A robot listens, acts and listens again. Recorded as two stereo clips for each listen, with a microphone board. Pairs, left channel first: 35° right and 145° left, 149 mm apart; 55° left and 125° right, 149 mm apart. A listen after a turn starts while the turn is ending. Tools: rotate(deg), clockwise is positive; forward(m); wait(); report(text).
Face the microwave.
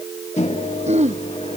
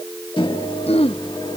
report("Found it: a microwave, straight ahead.")